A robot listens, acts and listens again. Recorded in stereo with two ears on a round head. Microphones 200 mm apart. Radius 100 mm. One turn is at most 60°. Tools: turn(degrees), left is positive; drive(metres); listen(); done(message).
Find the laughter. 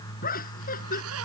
turn(degrees=40)
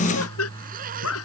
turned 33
turn(degrees=60)
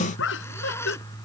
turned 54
turn(degrees=55)
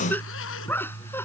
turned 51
turn(degrees=10)
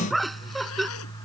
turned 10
done("Facing the laughter.")